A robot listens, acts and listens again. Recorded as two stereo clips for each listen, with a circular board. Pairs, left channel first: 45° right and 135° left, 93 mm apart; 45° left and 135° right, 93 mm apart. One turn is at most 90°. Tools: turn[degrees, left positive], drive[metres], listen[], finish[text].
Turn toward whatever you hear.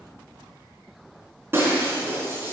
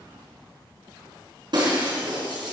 Thought: The breaking glass: 165° right.
Action: turn[-90]
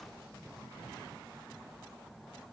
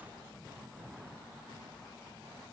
Thought: Nothing new. It was at 75° right.
Action: turn[-75]
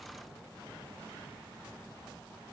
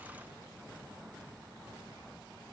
Action: finish[Facing where the breaking glass came from. I can't hear it now.]